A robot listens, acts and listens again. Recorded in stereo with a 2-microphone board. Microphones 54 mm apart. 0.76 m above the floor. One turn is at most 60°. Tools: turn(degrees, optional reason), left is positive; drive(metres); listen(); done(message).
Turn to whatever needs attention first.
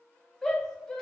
turn(degrees=30)
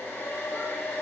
listen()
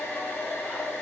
listen()
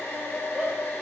turn(degrees=-20, reason="So it is at 20° right.")
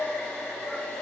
listen()
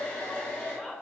done("Facing the shout.")